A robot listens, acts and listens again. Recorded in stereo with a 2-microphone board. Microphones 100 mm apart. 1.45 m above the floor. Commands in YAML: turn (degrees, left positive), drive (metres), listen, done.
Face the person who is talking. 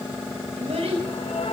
turn: -90
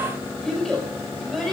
done: "Found it: a child speaking, straight ahead."